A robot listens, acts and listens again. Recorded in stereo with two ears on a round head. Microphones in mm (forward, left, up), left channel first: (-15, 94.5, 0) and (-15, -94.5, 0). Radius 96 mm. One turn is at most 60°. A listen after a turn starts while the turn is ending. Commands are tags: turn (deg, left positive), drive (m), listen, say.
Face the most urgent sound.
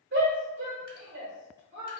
<turn deg="-55"/>
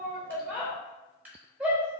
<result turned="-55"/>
<say>Found it: a shout, straight ahead.</say>